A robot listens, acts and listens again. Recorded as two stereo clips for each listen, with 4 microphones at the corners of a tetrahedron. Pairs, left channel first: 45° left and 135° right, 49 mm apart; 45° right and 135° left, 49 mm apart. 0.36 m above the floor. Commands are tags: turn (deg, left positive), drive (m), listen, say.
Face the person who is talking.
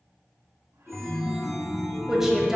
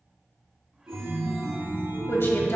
<turn deg="-55"/>
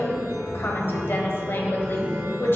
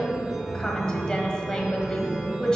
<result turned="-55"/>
<turn deg="25"/>
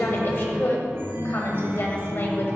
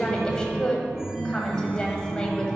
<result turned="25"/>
<turn deg="25"/>
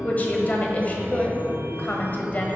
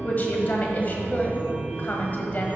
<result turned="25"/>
<say>Found it: a woman speaking, straight ahead, 1 to 2 m away.</say>